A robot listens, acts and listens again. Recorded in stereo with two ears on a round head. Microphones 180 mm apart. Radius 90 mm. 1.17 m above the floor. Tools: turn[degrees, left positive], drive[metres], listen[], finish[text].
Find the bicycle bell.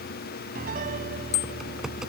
Thought: The bicycle bell: about 60° left or 120° left.
Action: turn[60]
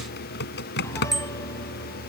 Action: finish[Facing the bicycle bell.]